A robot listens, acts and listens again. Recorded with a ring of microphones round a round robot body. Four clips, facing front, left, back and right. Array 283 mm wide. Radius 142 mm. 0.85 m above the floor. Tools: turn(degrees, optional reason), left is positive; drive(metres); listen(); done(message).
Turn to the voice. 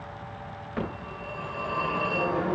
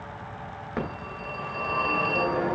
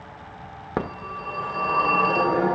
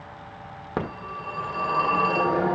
listen()
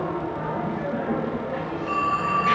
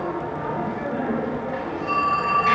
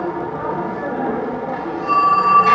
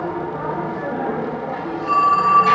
listen()
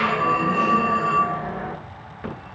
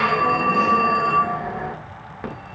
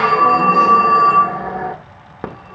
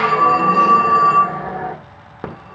done("I can't make out anyone speaking to turn to.")